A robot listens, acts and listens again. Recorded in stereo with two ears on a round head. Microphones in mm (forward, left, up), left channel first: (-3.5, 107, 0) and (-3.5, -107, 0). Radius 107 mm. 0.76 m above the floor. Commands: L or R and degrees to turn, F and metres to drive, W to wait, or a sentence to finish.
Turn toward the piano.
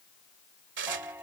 R30
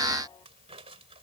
W
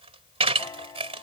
L15
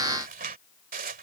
W
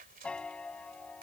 Found it: a piano, straight ahead.